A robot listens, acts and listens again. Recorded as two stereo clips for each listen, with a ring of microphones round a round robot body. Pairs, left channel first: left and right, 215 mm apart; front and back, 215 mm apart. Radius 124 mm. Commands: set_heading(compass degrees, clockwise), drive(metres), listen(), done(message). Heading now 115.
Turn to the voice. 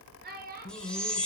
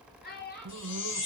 set_heading(160)
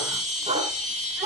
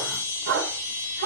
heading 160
listen()
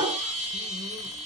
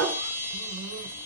listen()
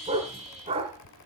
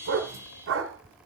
done("I heard a child speaking from this way, but can't make it out now.")